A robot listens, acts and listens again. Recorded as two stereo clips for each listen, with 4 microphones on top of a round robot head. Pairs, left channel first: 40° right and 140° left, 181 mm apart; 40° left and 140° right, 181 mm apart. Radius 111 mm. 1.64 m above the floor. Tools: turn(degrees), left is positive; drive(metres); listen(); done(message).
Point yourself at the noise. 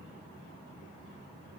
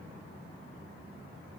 listen()
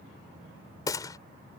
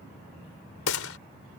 turn(degrees=30)
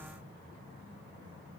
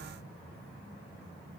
done("I heard a gunshot from this way, but can't make it out now.")